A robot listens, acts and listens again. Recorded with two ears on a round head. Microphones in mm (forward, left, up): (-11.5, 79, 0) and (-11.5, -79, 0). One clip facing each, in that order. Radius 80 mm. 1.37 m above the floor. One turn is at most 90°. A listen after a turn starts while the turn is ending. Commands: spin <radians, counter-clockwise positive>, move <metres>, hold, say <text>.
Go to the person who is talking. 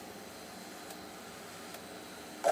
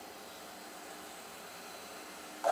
hold
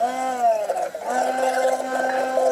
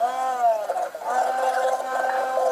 hold
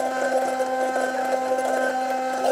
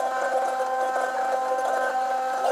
say I can't make out anyone speaking to turn to.